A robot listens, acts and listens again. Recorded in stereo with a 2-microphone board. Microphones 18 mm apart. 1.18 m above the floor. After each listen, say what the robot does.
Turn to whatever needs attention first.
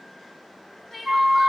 Turn 30° left.
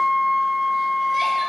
Keep listening.
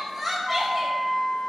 Found it: crying, straight ahead.